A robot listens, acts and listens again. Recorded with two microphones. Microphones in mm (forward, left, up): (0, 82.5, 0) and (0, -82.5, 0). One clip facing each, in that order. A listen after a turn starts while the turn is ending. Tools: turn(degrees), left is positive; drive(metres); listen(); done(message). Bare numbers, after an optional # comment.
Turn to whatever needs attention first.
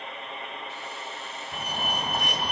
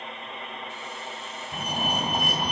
turn(-30)
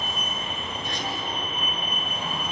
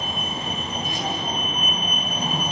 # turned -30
# So it is at 135° right.
turn(-135)
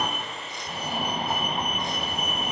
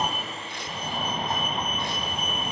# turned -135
# The fire alarm is now 10° left.
turn(10)
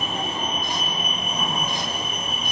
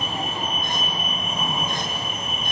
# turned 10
done("Found it: a fire alarm, straight ahead, over 4 m away.")